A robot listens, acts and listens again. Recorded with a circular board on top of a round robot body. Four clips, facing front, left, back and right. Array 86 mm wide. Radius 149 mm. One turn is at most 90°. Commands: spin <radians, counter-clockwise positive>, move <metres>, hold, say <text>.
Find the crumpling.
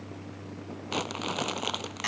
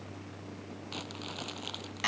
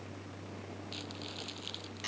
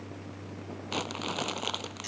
spin -0.52
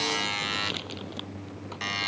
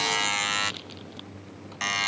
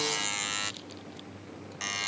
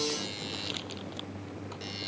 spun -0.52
hold
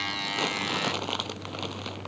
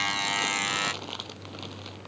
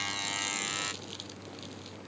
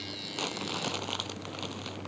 say Facing the crumpling.